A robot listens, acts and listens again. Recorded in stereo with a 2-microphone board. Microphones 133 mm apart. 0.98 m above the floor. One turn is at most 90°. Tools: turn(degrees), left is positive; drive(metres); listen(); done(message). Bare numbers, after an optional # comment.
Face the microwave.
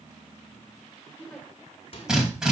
# The microwave: about 45° left or 135° left.
turn(45)
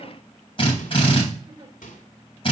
# So it is at 90° left.
turn(90)
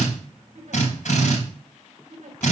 listen()
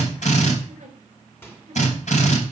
# The microwave is now 15° left.
turn(15)
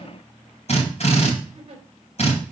listen()
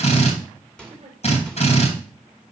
done("Found it: a microwave, straight ahead.")